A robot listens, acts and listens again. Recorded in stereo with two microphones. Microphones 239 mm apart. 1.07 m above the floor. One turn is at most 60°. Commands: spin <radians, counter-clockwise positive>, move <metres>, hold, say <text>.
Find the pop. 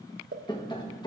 spin -0.79
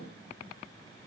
hold
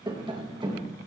say I heard a pop, but can't make it out now. It was about straight ahead or 90° right.